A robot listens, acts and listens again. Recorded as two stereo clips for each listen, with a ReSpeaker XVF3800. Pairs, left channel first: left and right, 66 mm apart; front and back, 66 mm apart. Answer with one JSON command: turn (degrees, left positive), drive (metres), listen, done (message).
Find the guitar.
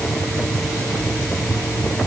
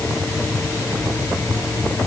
{"listen": true}
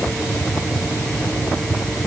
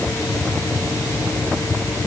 {"listen": true}
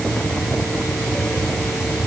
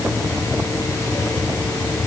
{"done": "I can't make out a guitar to turn to."}